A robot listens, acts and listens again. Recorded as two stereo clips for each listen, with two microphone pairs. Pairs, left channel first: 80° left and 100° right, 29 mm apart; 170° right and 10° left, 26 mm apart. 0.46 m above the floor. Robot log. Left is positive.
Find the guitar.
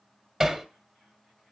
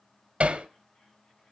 cmd idle
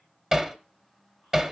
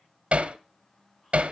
cmd idle
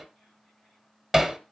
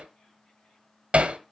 end: I can't make out a guitar, only hammering.